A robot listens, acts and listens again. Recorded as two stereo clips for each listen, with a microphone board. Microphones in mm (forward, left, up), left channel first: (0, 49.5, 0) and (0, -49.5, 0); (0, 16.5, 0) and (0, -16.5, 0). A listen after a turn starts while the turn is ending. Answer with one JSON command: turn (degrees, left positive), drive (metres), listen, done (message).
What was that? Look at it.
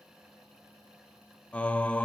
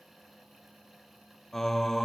{"turn": 30}
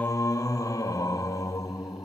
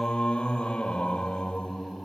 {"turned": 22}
{"turn": 145}
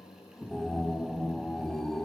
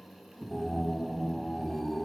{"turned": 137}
{"done": "Facing the singing."}